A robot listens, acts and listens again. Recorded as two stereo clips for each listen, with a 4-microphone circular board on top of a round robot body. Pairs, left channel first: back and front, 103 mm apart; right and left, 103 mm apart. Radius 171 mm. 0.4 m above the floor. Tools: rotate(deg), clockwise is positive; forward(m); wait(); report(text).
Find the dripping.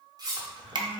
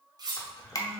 rotate(40)
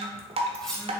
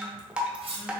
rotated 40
rotate(-10)
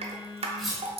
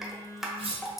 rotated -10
report("Facing the dripping, under 1 m away.")